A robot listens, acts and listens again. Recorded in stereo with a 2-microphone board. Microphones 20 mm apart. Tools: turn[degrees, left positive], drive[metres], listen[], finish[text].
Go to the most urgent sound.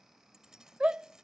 Thought: The shout: about 65° right or 115° right.
Action: turn[-65]
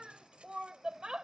Thought: So it is at 45° right.
Action: turn[-45]
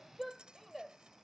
Thought: The shout is now 10° right.
Action: turn[-10]
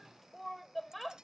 Action: drive[1.0]
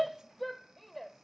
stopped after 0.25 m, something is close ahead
Action: finish[Something is in my way. I am facing the shout but have not reached it.]